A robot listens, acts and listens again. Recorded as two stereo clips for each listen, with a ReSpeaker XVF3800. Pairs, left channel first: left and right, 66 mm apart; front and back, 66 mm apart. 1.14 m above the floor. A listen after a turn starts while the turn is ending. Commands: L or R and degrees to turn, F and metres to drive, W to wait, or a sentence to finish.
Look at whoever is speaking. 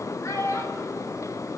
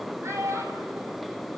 L130
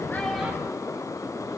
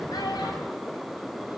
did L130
W
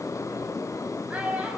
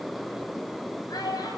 R20
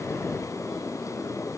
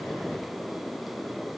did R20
W
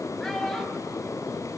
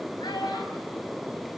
Found it: a child speaking, straight ahead.